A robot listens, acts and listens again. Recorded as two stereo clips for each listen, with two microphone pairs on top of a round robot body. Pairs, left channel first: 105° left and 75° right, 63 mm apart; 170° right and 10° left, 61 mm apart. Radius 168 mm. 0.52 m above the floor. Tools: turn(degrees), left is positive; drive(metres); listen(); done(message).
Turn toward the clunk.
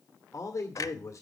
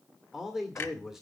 turn(degrees=130)
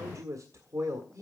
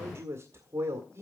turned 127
done("I heard a clunk from this way, but can't make it out now.")